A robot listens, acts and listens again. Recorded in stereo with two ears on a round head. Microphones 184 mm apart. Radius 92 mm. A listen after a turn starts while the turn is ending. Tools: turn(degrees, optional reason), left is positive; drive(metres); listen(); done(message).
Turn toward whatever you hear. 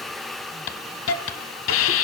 turn(degrees=75, reason="The hiss: about 75° left or 105° left.")
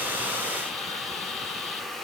listen()
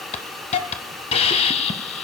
turn(degrees=30, reason="So it is at 30° left.")
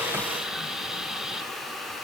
listen()
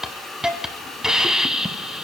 done("Facing the hiss.")